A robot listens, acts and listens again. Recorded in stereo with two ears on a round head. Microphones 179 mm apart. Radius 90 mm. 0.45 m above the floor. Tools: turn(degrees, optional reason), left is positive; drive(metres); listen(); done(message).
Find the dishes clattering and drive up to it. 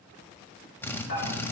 turn(degrees=50, reason="The dishes clattering: about 50° left or 130° left.")
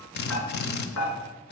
turn(degrees=85, reason="So it is at 85° left.")
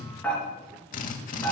turn(degrees=10, reason="The dishes clattering is now 10° left.")
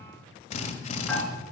drive(metres=1.0)
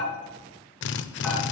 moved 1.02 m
drive(metres=1.0)
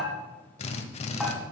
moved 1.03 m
drive(metres=1.0)
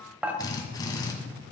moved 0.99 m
drive(metres=1.0)
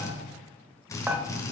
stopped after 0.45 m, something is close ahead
turn(degrees=-10, reason="The dishes clattering is now 10° right.")
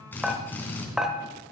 done("I am next to the dishes clattering.")